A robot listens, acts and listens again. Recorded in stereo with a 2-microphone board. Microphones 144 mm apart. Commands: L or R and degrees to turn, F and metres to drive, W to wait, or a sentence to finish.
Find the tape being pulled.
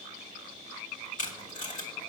L60
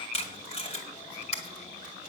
L50
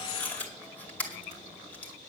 L10
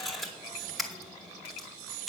Facing the tape being pulled.